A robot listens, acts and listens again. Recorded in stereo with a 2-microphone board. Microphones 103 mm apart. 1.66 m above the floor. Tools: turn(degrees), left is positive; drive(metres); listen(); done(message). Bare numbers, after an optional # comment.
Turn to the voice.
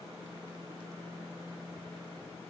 listen()
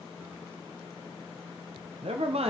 # The man speaking: about 70° right or 110° right.
turn(-70)
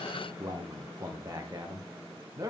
# So it is at 35° right.
turn(-35)
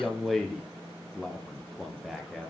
done("Facing the man speaking.")